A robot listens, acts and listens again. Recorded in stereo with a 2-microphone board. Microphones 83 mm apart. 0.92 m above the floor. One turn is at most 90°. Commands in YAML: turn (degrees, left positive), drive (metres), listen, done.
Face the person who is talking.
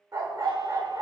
listen: true
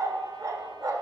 listen: true
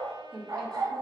turn: 30
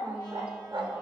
listen: true
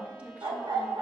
turn: -20
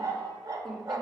done: "Facing the woman speaking, 1 to 2 m away."